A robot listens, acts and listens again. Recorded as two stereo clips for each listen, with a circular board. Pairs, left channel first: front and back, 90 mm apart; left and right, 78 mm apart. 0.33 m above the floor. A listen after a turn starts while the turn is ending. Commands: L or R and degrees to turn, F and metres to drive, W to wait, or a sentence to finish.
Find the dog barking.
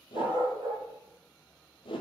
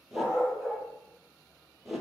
R170
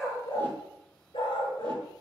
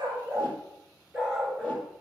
R15
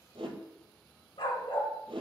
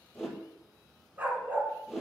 R25
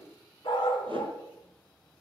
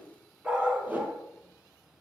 R20
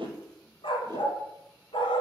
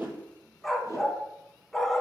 Facing the dog barking.